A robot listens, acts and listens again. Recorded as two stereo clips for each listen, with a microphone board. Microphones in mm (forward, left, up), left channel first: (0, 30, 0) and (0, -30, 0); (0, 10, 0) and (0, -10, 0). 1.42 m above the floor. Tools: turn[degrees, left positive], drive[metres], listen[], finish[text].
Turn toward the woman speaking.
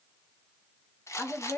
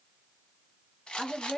Thought: The woman speaking: about 45° left or 135° left.
Action: turn[45]
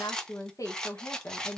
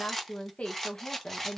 Thought: So it is at 70° left.
Action: turn[70]
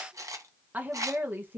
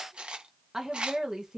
Thought: The woman speaking is now 35° right.
Action: turn[-35]
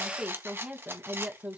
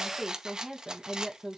Thought: The woman speaking is now 20° right.
Action: turn[-20]
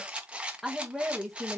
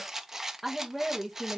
Action: finish[Found it: a woman speaking, straight ahead, 1 to 2 m away.]